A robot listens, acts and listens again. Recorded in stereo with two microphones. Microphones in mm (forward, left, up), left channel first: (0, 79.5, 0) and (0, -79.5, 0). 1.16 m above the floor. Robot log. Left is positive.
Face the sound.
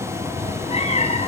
note: The cat meowing: about 40° left or 140° left.
cmd yaw +40
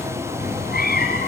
note: So it is at 110° left.
cmd yaw +110
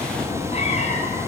note: The cat meowing is now 45° left.
cmd yaw +45
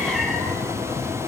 cmd idle
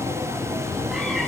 cmd idle
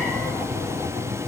end: I heard a cat meowing from this way, but can't make it out now.